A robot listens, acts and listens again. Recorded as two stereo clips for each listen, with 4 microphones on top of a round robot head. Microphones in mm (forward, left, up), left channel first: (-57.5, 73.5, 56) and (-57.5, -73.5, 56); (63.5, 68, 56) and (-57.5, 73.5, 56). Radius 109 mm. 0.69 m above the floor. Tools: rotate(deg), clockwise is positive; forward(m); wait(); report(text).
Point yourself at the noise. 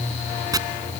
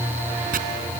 rotate(155)
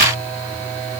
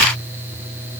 wait()
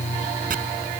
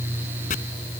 rotate(45)
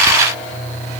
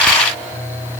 wait()
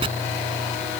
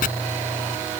rotate(25)
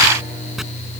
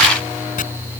report("Found it: chopping, straight ahead.")